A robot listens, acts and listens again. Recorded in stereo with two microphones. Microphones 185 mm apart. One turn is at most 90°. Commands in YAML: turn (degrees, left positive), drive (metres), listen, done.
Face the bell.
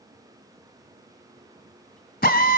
listen: true
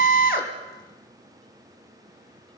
listen: true
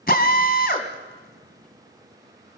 done: "I can't make out a bell to turn to."